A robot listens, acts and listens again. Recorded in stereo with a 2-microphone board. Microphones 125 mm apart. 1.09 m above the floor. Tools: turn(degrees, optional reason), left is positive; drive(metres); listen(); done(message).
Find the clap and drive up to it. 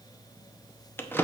listen()
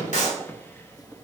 turn(degrees=90)
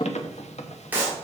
turn(degrees=-15, reason="So it is at 15° right.")
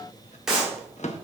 drive(metres=1.0)
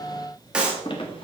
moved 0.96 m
turn(degrees=-10, reason="The clap is now 10° right.")
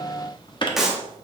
drive(metres=1.0)
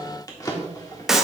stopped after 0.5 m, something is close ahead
done("I am next to the clap.")